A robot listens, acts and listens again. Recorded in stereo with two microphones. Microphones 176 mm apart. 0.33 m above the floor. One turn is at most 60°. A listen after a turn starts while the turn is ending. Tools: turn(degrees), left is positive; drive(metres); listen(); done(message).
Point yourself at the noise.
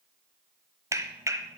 turn(degrees=-15)
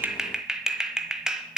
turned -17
done("Found it: a clap, straight ahead, 1 to 2 m away.")